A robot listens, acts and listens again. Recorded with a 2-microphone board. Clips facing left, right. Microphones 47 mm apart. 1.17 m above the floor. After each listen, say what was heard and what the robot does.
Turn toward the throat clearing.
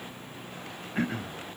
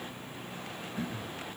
The throat clearing: about 60° left or 120° left. Turn 60° left.
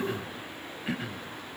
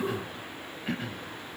Facing the throat clearing.